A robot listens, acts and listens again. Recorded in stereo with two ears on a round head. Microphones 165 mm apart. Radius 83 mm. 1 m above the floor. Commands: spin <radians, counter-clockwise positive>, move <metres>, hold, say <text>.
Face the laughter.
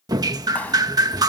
hold
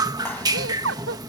spin -1.57
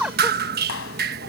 say Found it: laughter, straight ahead.